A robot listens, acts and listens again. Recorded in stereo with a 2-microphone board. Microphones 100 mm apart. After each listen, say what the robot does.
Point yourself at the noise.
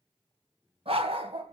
Turn 75° right.
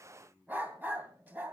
Turn 20° right.
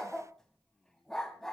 Facing the dog barking.